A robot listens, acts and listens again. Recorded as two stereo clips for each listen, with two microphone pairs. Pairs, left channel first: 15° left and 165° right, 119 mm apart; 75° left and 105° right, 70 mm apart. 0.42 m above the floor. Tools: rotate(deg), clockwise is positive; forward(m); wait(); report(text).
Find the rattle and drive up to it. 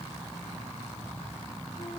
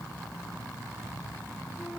wait()
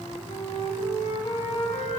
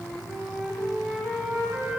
wait()
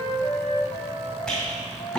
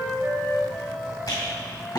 rotate(-100)
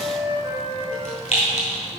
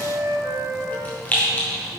rotate(-10)
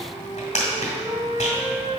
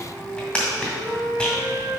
forward(1.0)
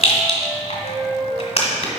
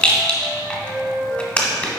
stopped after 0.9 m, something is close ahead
report("Arrived at the rattle, straight ahead.")